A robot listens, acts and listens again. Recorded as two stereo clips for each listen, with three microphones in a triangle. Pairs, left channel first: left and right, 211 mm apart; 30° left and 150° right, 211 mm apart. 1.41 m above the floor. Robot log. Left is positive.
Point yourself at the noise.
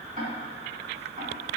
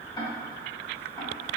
note: The ticking: 40° right.
cmd yaw -40
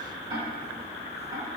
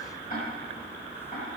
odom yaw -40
note: The ticking is now 20° right.
cmd yaw -20
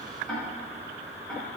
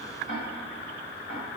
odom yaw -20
end: Facing the ticking, 2 to 4 m away.